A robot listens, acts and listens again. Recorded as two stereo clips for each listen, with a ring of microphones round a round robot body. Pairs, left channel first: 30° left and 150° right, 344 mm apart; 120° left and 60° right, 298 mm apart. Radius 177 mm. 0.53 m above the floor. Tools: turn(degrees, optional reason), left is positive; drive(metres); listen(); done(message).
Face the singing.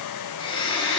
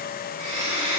listen()
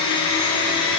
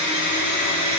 listen()
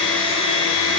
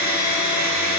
done("I can't make out singing to turn to.")